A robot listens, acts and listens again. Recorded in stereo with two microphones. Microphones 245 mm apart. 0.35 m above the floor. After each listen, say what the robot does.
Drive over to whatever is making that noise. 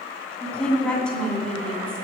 Turn 30° left.
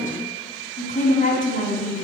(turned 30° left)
Turn 145° left.
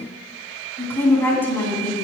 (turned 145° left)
Turn 10° left.
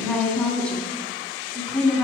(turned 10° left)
Drive 1.0 m forward.
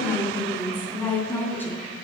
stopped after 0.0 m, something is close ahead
Turn 10° left.
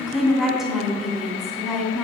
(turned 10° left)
Blocked. The woman speaking is further on, straight ahead.